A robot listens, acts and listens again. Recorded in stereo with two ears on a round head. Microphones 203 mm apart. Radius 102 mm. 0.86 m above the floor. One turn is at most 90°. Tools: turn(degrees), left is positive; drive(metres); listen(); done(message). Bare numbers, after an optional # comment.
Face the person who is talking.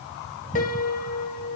listen()
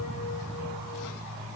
listen()
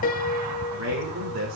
turn(-90)
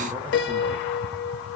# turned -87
listen()
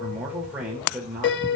done("Found it: a man speaking, straight ahead, 2 to 4 m away.")